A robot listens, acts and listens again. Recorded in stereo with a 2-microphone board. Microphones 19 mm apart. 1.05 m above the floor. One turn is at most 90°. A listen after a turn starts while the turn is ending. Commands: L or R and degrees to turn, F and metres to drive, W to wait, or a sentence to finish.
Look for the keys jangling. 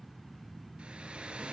W
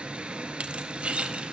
R90
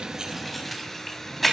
L10
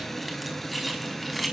Found it: keys jangling, straight ahead, over 4 m away.